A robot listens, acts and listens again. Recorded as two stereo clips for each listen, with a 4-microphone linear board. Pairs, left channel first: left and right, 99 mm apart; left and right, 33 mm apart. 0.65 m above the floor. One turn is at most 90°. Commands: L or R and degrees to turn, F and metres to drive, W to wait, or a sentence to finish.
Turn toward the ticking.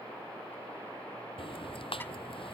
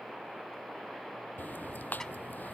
L65
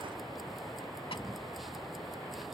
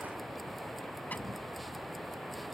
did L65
Facing the ticking.